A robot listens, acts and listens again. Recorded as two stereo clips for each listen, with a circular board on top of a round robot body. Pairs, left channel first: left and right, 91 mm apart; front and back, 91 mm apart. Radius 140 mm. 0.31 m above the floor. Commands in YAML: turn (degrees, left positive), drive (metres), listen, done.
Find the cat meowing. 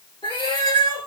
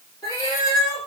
turn: 50
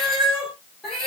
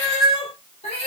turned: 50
done: "Found it: a cat meowing, straight ahead."